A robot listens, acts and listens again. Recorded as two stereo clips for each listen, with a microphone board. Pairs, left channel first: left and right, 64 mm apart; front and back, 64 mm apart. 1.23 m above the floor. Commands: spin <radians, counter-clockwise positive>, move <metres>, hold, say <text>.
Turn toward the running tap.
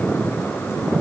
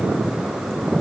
hold
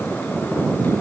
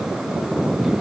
hold
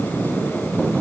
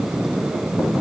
say I can't make out a running tap.